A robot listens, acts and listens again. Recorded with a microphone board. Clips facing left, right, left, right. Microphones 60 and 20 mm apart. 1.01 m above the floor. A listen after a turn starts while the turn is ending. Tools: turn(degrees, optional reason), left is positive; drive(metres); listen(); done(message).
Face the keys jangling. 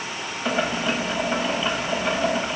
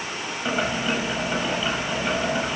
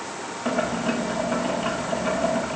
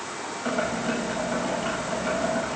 listen()
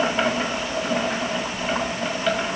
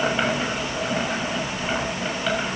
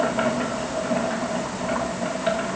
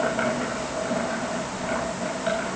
listen()
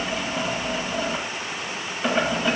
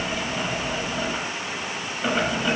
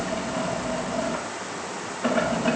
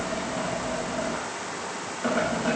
done("I can't make out keys jangling to turn to.")